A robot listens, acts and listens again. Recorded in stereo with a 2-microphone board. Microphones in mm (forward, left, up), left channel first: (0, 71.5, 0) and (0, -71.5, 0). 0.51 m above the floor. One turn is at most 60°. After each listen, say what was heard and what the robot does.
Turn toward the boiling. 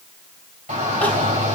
Keep listening.
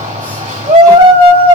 Keep listening.
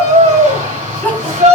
I can't make out boiling, only a shout and crying.